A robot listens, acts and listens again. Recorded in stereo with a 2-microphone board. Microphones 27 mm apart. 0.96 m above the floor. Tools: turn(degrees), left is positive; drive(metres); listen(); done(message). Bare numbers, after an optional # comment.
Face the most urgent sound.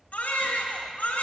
turn(90)
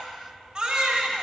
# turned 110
# So it is at 20° right.
turn(-20)
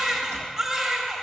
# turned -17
done("Facing the baby crying, 1 to 2 m away.")